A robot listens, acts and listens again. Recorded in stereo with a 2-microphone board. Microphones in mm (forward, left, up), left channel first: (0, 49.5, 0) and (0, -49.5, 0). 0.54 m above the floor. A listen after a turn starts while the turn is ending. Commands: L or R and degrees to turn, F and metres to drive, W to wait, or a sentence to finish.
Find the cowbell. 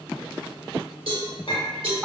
R70
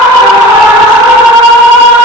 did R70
W
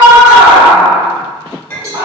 R35
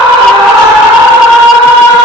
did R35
W
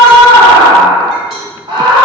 W
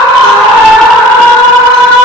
Facing where the cowbell came from. I can't hear it now.